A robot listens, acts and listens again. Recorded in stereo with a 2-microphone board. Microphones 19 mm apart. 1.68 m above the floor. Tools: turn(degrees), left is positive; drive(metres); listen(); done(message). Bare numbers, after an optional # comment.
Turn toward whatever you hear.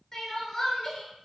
# The crying: about 25° left or 155° left.
turn(25)
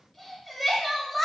done("Facing the crying.")